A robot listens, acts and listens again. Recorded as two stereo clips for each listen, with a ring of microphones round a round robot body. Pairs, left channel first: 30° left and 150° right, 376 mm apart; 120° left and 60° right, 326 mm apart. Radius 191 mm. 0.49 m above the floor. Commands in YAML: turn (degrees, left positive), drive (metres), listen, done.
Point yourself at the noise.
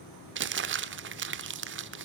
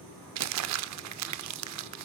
turn: -95
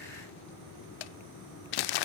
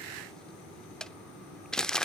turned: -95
turn: 30
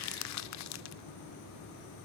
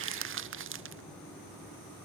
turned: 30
turn: -10
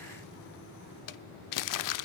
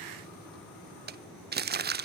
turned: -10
done: "Facing the crumpling, under 1 m away."